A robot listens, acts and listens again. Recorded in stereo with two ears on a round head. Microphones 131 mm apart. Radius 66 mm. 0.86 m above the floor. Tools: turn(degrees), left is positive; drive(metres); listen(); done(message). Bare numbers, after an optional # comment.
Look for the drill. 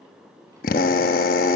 # The drill: about 65° left or 115° left.
turn(65)
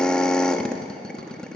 done("Found it: a drill, straight ahead.")